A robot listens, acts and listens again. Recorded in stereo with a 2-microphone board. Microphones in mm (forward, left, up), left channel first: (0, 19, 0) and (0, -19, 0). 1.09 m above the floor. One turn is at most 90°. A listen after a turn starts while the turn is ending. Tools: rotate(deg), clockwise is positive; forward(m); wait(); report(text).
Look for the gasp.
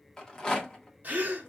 rotate(45)
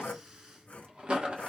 wait()
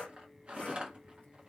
report("I heard a gasp, but can't make it out now. It was about straight ahead or 90° right.")